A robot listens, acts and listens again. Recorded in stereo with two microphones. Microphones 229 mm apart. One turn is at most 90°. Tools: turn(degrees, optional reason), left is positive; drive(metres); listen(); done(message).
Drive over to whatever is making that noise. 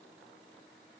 listen()
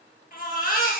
turn(degrees=40, reason="The baby crying: about 40° left or 140° left.")
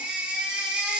drive(metres=1.0)
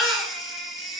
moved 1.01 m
drive(metres=1.0)
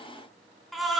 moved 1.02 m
drive(metres=1.0)
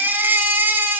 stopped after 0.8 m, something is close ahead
turn(degrees=-10, reason="The baby crying is now 10° right.")
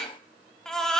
done("I am next to the baby crying.")